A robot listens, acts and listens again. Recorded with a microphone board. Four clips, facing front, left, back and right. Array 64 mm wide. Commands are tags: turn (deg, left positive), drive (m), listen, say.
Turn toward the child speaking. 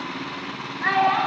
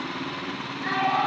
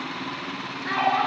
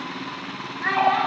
<turn deg="-25"/>
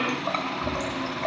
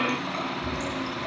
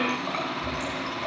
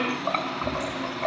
<listen/>
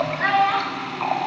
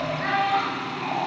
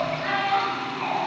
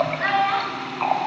<turn deg="-20"/>
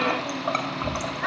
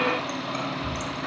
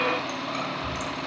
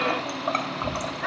<listen/>
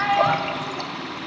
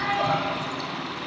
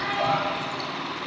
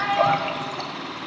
<turn deg="-20"/>
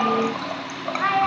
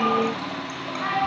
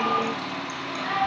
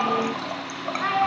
<turn deg="-15"/>
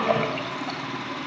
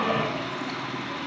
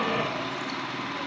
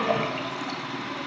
<listen/>
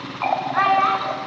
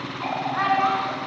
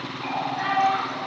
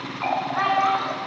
<say>Facing the child speaking.</say>